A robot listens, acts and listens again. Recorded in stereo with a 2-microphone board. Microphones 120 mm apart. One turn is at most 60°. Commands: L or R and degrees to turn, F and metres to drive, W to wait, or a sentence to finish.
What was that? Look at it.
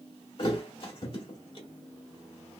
L45
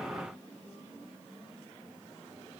W
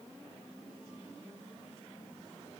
I heard a thud, but can't make it out now. It was about straight ahead or 90° left.